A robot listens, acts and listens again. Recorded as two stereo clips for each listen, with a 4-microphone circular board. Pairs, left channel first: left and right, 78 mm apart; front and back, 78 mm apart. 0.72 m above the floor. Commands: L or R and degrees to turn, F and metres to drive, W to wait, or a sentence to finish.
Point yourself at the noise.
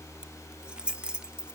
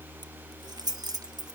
R165
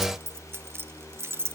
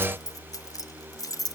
R35
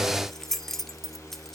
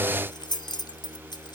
Found it: keys jangling, straight ahead, 1 to 2 m away.